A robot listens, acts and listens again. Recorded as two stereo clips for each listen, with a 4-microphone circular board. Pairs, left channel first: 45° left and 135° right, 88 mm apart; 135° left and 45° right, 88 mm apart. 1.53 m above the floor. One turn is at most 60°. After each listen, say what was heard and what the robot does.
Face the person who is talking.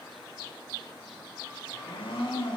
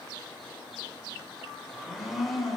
Keep listening.
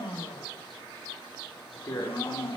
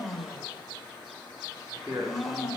Facing the man speaking, over 4 m away.